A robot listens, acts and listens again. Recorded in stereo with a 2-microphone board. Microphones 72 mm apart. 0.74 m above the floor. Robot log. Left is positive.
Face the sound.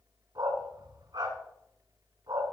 note: The dog barking: about 75° right or 105° right.
cmd yaw -75
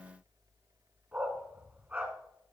note: So it is at 25° right.
cmd yaw -25
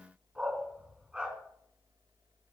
note: The dog barking is now 15° right.
cmd yaw -15
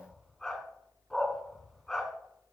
end: Found it: a dog barking, straight ahead.